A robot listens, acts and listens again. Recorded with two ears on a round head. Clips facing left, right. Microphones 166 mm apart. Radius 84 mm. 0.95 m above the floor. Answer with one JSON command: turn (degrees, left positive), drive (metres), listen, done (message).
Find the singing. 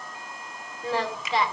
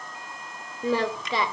{"turn": -90}
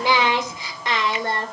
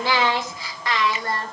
{"turn": 25}
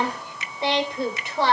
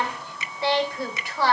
{"turn": 20}
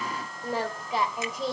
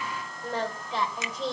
{"turn": 10}
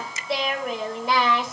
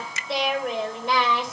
{"done": "Found it: singing, straight ahead, 2 to 4 m away."}